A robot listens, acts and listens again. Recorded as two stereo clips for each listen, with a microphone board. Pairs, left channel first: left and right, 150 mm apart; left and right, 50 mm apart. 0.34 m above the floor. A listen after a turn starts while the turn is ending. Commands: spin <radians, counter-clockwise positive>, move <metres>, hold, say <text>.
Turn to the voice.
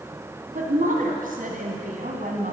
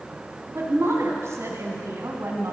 spin -1.22
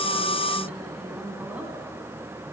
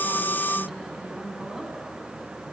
spin -0.17
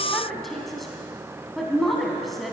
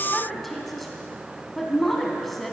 say Found it: a woman speaking, straight ahead, 2 to 4 m away.